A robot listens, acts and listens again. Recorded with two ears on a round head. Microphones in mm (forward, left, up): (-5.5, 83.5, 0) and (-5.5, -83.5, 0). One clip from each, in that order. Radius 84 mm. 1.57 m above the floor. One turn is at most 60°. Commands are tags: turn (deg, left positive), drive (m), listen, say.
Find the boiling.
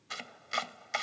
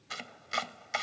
<listen/>
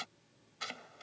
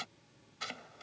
<listen/>
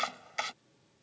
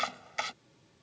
<say>I can't make out boiling, only chopping.</say>